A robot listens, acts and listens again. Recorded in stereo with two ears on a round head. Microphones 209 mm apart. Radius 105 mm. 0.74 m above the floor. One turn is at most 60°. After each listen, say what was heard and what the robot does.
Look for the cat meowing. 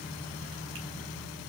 Keep listening.
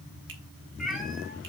Turn 30° left.
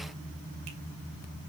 Keep listening.
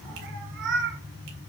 So it is at 50° right. Turn 50° right.
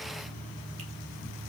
Keep listening.
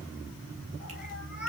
Found it: a cat meowing, straight ahead, over 4 m away.